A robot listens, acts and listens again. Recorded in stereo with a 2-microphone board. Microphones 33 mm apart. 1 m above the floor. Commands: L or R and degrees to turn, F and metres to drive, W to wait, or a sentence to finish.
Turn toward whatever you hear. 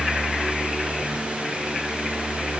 W
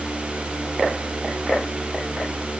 W
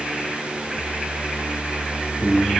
L30
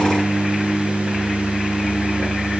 R25
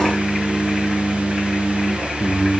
L10
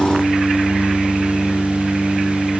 Facing the singing.